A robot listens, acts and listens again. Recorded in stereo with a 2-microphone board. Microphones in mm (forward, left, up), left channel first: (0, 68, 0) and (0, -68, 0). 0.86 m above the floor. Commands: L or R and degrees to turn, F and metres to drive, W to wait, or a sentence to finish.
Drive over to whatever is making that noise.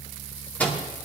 L30
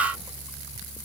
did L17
W
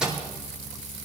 F1.0
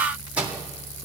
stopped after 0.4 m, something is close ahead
R10
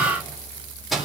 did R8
Blocked. The microwave is further on, straight ahead.